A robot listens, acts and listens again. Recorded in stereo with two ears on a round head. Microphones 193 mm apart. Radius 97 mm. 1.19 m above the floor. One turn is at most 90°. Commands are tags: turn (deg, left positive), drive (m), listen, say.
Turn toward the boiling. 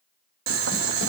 <turn deg="-65"/>
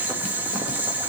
<turn deg="-10"/>
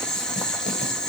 <say>Facing the boiling.</say>